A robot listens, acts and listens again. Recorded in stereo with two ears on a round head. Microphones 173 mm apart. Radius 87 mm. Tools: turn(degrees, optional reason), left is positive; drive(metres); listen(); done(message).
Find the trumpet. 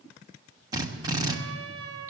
turn(degrees=-90)
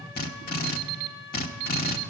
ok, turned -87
done("Found it: a trumpet, straight ahead.")